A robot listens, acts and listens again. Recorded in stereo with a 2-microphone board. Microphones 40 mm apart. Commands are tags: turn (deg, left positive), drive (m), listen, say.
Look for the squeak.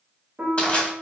<listen/>
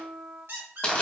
<turn deg="-90"/>
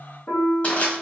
<listen/>
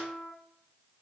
<listen/>
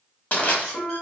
<say>Facing where the squeak came from. I can't hear it now.</say>